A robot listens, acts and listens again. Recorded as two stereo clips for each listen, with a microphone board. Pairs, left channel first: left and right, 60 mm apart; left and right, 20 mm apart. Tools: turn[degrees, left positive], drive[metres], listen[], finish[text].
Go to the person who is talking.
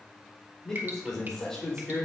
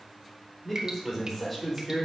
Action: turn[30]
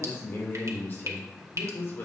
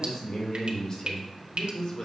Thought: So it is at 140° left.
Action: turn[140]
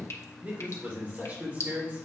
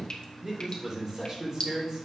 Thought: The man speaking is now 30° right.
Action: turn[-30]
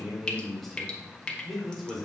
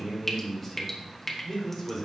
Action: drive[1.0]
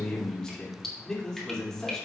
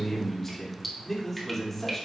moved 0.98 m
Thought: The man speaking is now 10° left.
Action: turn[10]
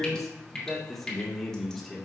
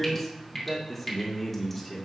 Action: drive[1.0]
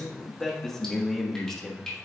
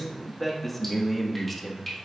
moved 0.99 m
Action: drive[1.0]
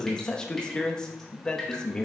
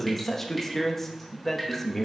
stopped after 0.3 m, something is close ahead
Thought: The man speaking is now 15° left.
Action: turn[15]
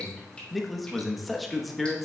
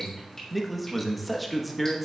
Action: finish[I am next to the man speaking.]